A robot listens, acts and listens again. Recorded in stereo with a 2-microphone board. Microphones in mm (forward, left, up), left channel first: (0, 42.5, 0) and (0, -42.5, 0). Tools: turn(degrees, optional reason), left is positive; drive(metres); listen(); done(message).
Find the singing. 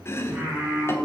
turn(degrees=-30)
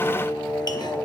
turn(degrees=35, reason="So it is at 35° left.")
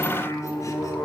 turn(degrees=25, reason="The singing is now 25° left.")
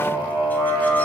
turn(degrees=10, reason="The singing is now 10° left.")
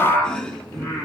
done("Found it: singing, straight ahead, 2 to 4 m away.")